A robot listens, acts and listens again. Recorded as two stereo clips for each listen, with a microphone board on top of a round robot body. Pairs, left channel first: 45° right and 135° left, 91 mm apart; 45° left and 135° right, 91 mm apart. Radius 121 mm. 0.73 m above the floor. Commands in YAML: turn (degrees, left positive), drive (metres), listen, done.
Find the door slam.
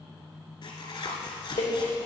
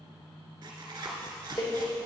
turn: -15
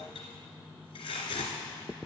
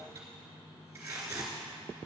done: "I heard a door slam from this way, but can't make it out now."